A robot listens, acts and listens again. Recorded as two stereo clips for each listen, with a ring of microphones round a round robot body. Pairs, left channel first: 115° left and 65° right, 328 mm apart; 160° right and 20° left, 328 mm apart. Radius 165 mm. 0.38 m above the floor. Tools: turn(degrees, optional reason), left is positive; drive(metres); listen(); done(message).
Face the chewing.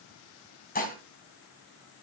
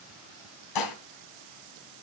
listen()
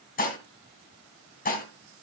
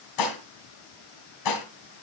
listen()
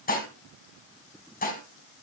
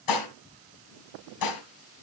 done("I can't make out chewing, only dishes clattering.")